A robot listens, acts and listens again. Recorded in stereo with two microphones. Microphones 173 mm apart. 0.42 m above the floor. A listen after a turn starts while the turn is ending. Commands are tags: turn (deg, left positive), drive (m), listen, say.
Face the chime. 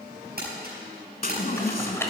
<turn deg="55"/>
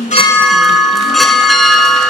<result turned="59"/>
<say>Facing the chime.</say>